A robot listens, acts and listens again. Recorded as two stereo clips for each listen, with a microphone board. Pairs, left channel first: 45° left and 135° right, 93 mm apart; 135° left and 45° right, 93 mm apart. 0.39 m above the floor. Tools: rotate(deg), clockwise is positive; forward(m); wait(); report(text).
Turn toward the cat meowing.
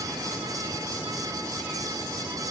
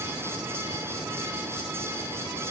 wait()
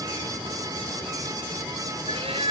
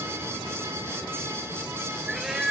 rotate(130)
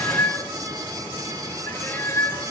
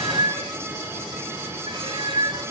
rotate(15)
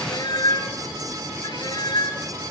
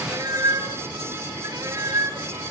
report("Facing the cat meowing.")